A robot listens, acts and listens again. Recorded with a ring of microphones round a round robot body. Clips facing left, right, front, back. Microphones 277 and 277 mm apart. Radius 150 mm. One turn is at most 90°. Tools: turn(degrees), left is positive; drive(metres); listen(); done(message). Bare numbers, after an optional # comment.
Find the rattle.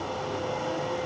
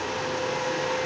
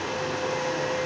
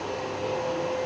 listen()
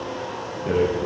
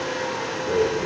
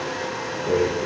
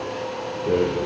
# The rattle: 110° left.
turn(90)
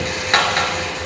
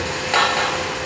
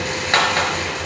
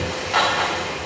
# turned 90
# The rattle is now 35° left.
turn(35)
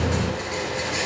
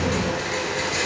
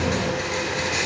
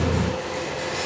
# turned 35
# The rattle is now 15° right.
turn(-15)
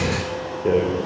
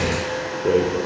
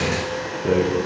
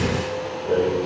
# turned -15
done("Found it: a rattle, straight ahead.")